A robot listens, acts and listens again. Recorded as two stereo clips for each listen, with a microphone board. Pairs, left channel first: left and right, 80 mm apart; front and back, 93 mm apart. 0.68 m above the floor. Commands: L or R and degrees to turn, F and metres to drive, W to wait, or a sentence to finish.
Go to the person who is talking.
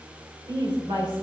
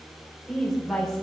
R85
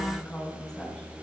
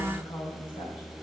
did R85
F1.0
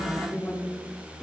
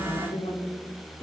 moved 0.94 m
F1.0
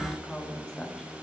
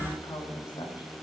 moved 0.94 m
L10
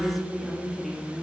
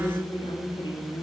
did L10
F1.0
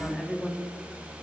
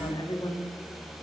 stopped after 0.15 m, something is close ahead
Arrived at the woman speaking, straight ahead.